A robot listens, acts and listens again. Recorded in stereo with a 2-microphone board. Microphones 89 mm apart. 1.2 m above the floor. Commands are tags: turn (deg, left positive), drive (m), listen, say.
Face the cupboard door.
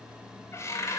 <turn deg="35"/>
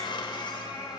<listen/>
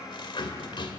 <turn deg="110"/>
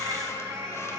<listen/>
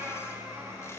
<listen/>
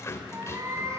<turn deg="35"/>
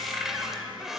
<say>Found it: a cupboard door, straight ahead.</say>